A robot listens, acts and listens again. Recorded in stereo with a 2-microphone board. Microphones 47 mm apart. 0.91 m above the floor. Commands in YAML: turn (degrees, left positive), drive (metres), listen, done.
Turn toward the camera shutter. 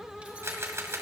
turn: -70
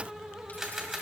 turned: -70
turn: -10
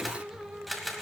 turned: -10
done: "Found it: a camera shutter, straight ahead, 1 to 2 m away."